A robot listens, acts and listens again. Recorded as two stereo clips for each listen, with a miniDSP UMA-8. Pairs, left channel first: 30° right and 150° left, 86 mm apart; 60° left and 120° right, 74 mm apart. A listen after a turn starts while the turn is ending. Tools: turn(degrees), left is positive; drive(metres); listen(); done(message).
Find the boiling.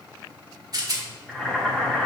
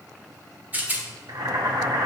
turn(degrees=-115)
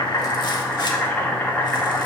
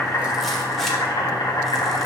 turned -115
turn(degrees=40)
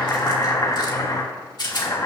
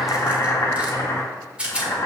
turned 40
turn(degrees=15)
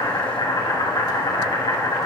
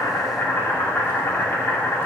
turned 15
done("Found it: boiling, straight ahead.")